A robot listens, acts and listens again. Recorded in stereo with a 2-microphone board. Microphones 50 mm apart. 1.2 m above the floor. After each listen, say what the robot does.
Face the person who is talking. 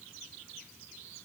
Keep listening.
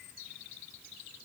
Keep listening.
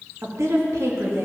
Turn 90° right.
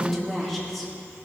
Facing the woman speaking.